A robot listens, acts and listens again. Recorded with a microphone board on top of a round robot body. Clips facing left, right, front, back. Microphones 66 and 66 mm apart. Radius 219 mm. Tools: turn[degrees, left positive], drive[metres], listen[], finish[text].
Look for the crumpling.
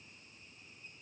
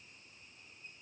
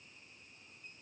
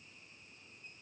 Action: listen[]
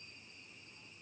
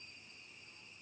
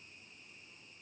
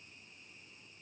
Action: listen[]
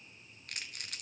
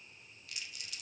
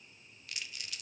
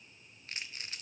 Thought: The crumpling: 125° left.
Action: turn[125]
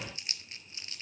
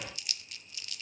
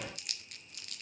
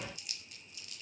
Thought: The crumpling is now 30° left.
Action: turn[30]
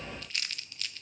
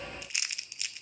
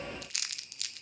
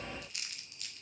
Thought: The crumpling is now 15° right.
Action: turn[-15]
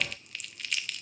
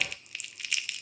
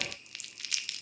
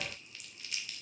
Action: finish[Found it: crumpling, straight ahead, under 1 m away.]